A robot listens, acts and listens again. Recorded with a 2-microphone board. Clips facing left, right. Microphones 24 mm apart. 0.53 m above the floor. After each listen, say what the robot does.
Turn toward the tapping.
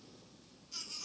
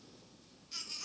Keep listening.
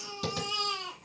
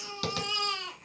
Turn 45° right.
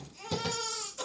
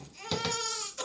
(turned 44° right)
Turn 90° right.
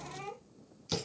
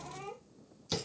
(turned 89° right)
Facing the tapping, 1 to 2 m away.